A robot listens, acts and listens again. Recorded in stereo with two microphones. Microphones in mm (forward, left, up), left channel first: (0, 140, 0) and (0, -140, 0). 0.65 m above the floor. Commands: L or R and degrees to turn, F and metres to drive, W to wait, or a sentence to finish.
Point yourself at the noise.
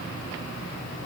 W
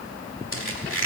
L45
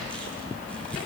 W
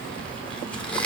Facing the squeak, 1 to 2 m away.